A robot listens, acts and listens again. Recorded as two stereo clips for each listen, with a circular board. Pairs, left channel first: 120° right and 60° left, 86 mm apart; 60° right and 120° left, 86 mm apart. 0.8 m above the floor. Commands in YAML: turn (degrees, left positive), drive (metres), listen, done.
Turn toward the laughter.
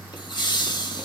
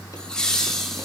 turn: -145
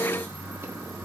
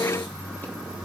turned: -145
listen: true
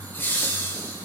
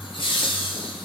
turn: -55
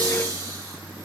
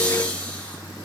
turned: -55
listen: true
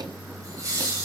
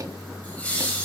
turn: 10
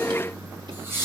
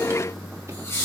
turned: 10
done: "Facing the laughter, over 4 m away."